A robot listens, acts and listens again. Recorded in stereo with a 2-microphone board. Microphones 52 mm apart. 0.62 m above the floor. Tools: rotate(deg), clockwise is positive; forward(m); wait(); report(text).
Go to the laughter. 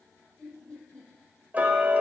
rotate(-15)
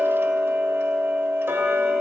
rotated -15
wait()
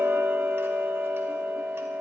wait()
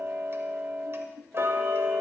forward(1.0)
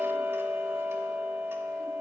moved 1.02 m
wait()
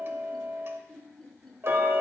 forward(1.0)
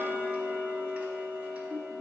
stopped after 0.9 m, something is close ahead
report("Arrived at the laughter, straight ahead.")